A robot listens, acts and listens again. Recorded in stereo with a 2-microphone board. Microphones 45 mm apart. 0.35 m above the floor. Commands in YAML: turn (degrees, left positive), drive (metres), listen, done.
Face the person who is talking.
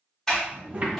turn: -30
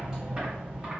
listen: true
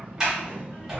turn: -115
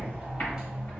listen: true
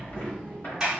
turn: 25
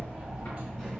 listen: true
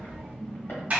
done: "Facing the child speaking."